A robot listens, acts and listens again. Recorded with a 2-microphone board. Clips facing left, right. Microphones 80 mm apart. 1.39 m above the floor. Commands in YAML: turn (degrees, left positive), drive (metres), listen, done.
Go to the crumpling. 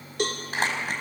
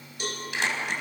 turn: 40
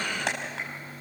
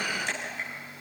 turn: 100
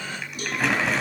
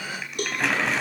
drive: 1.0
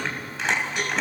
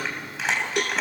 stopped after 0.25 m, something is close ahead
done: "Blocked. The crumpling is further on, straight ahead."